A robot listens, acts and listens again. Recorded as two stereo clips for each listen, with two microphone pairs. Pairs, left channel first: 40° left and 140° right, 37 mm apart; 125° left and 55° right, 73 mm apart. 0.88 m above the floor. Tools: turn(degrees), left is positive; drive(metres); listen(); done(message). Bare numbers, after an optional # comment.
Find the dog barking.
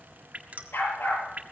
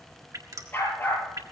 # The dog barking: 60° left.
turn(60)
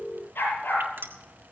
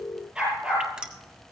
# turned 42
# The dog barking is now 20° left.
turn(20)
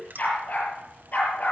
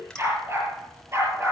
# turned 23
done("Facing the dog barking, over 4 m away.")